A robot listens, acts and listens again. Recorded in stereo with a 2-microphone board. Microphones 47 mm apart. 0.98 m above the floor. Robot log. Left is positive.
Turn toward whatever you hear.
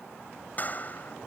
note: The clap: about 35° left or 145° left.
cmd yaw +35
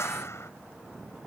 note: So it is at 110° left.
cmd yaw +110
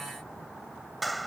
end: Found it: a clap, straight ahead.